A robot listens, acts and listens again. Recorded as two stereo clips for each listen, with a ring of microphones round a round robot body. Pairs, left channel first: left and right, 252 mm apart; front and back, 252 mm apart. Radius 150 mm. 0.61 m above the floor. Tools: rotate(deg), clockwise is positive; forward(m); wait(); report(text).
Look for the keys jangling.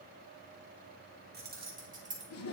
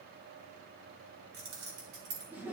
rotate(155)
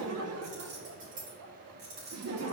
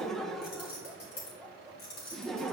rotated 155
rotate(35)
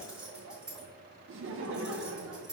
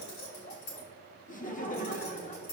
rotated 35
report("Facing the keys jangling.")